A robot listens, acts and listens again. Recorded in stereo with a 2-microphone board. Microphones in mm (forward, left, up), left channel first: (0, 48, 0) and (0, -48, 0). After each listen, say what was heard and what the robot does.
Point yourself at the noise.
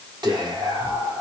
The whispering: about 45° right or 135° right. Turn 45° right.
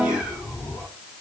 So it is at 15° right. Turn 15° right.
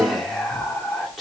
Facing the whispering, 1 to 2 m away.